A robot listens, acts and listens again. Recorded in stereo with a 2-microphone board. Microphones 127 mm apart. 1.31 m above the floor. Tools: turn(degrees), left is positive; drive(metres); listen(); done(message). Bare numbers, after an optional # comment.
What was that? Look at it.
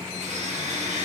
# The blender: about 65° right or 115° right.
turn(-65)
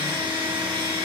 # So it is at 45° right.
turn(-45)
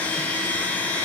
# The blender is now 15° left.
turn(15)
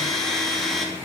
done("Facing the blender.")